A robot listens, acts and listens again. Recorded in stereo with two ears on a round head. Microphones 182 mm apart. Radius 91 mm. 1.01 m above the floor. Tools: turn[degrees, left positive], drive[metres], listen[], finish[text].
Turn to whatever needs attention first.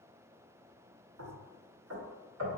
Action: listen[]
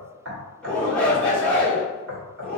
Action: turn[30]
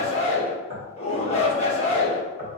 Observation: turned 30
Thought: So it is at 140° left.
Action: turn[140]
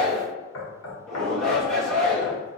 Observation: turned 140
Action: finish[Found it: a shout, straight ahead.]